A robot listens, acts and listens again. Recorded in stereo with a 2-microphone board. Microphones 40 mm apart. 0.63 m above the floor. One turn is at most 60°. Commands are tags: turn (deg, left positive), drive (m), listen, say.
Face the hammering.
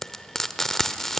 <listen/>
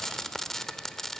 <listen/>
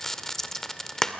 <say>I can't make out hammering, only frying.</say>